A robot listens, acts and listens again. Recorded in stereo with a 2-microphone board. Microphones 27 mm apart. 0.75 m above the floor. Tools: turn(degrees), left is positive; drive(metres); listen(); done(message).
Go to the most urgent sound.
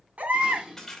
turn(degrees=-65)
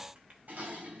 listen()
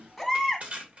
drive(metres=1.0)
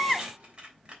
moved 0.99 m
drive(metres=1.0)
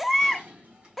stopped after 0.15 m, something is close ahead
done("Arrived at the baby crying, straight ahead.")